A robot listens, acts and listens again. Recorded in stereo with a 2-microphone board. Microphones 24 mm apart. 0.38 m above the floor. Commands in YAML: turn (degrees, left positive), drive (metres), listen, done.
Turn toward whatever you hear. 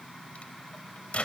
turn: 60
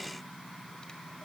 listen: true
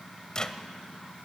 turn: 35
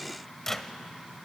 turn: 15
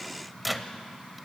done: "Found it: a microwave, straight ahead."